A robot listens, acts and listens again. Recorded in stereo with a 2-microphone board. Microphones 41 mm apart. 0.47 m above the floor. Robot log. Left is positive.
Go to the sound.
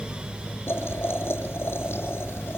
cmd yaw +90
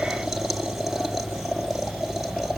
note: So it is at 10° right.
cmd yaw -10
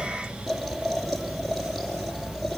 cmd fwd 1.0
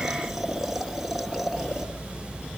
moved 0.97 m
cmd fwd 1.0
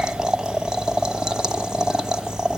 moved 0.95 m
note: The boiling is now 20° right.
cmd yaw -20
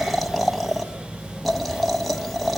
cmd fwd 1.0
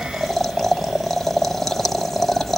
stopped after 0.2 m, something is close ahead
end: I am next to the boiling.